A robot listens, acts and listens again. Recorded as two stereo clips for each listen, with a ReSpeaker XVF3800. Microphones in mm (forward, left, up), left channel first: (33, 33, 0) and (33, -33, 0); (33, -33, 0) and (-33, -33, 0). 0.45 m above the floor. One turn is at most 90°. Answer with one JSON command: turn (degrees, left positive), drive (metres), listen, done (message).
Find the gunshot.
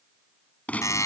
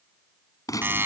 {"turn": 25}
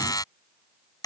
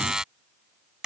{"done": "Facing where the gunshot came from. I can't hear it now."}